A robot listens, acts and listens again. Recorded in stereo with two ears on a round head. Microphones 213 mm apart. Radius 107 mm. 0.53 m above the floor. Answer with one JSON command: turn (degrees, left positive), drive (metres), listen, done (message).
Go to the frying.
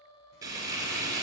{"turn": -15}
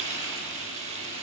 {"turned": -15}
{"turn": -150}
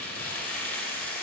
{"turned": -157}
{"turn": 10}
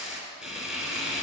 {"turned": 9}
{"drive": 1.0}
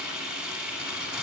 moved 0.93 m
{"drive": 1.0}
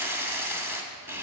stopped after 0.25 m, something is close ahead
{"turn": -10}
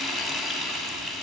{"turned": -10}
{"done": "I am next to the frying."}